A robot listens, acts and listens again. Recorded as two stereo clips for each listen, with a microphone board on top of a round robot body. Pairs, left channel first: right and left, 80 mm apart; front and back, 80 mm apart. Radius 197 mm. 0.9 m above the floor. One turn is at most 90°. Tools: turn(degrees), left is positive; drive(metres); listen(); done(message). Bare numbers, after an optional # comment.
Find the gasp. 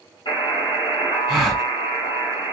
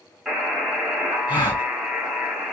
done("Facing the gasp.")